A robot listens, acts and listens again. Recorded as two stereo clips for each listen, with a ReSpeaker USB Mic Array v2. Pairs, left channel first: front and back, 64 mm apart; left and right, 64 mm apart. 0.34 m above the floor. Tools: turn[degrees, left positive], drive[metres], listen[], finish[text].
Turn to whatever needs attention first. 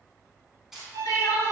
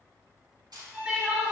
Thought: The crying: 15° right.
Action: turn[-15]
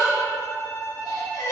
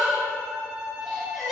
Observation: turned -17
Action: finish[Facing the crying.]